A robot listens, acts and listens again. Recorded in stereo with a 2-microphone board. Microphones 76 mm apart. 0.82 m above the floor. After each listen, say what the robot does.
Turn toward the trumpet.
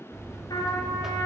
Turn 60° left.
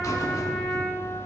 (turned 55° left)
Turn 10° left.
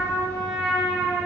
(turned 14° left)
Facing the trumpet.